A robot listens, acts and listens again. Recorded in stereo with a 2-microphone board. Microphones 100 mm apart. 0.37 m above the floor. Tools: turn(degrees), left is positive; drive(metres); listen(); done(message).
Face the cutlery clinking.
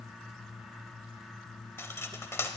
turn(degrees=25)
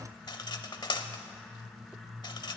turn(degrees=125)
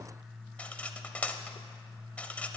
turn(degrees=15)
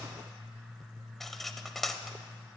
done("Found it: cutlery clinking, straight ahead.")